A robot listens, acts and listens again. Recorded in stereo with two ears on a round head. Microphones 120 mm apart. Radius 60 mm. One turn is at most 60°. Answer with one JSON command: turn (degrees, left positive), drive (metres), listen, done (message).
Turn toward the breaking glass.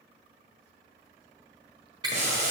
{"turn": -35}
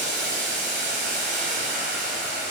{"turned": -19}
{"listen": true}
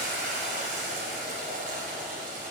{"done": "I heard breaking glass, but can't make it out now. It was about 15° right or 130° right."}